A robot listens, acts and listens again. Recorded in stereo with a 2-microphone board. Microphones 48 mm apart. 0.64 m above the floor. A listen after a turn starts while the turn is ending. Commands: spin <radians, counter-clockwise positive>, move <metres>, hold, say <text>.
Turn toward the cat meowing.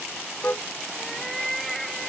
spin 0.52
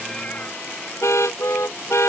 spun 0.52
hold
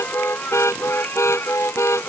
spin 2.27
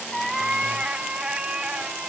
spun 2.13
spin -0.35
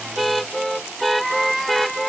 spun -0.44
say Found it: a cat meowing, straight ahead.